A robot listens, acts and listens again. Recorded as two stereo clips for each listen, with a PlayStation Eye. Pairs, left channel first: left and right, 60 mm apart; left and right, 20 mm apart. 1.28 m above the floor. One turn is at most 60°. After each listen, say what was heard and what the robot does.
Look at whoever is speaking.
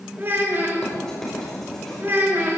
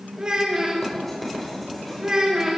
The child speaking: about 40° right or 140° right. Turn 40° right.
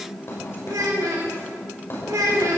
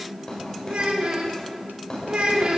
So it is at 105° right. Turn 60° right.
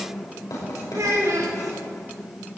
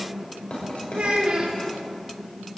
The child speaking is now 65° right. Turn 60° right.
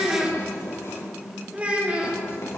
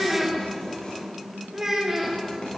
The child speaking is now 25° right. Turn 25° right.
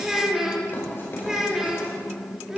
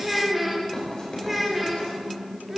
The child speaking is now 10° right. Turn 10° right.
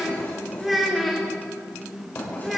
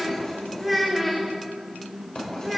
Facing the child speaking, 2 to 4 m away.